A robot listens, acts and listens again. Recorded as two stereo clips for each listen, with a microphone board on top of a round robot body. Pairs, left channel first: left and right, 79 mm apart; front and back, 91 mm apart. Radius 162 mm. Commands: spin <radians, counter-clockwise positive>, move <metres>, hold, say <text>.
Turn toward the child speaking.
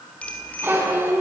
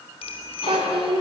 spin -2.62
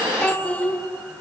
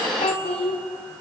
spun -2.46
spin 0.35
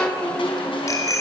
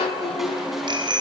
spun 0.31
spin 0.26
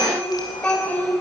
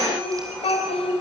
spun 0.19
spin 0.35
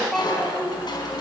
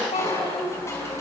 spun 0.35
say Found it: a child speaking, straight ahead, 2 to 4 m away.